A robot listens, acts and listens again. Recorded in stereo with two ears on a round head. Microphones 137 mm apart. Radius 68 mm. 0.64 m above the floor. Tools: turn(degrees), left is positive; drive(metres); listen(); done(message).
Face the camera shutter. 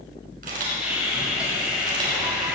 turn(degrees=-60)
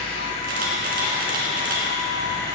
turn(degrees=-65)
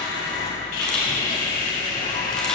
listen()
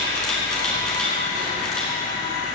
done("Found it: a camera shutter, straight ahead, 2 to 4 m away.")